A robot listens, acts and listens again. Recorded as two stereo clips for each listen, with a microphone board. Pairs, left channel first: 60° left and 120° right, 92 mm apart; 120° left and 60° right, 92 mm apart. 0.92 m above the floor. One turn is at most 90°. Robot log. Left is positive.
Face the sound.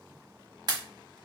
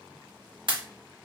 note: The pop: 85° right.
cmd yaw -85
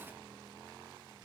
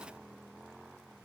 end: I heard a pop from this way, but can't make it out now.